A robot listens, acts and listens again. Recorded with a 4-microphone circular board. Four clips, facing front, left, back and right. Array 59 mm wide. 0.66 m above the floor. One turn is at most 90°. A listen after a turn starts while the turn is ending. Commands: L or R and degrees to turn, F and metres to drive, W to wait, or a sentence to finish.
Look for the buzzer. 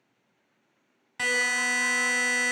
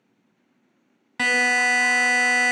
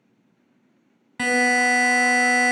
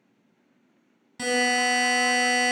L90
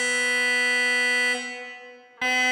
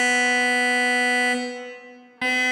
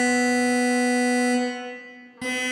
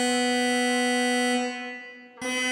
L50
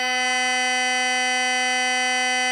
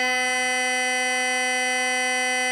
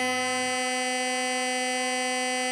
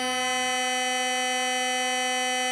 L25
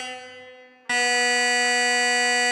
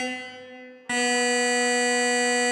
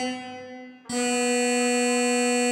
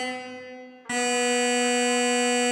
L10
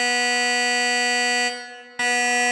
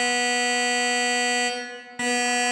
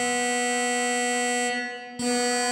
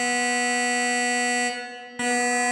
Found it: a buzzer, straight ahead.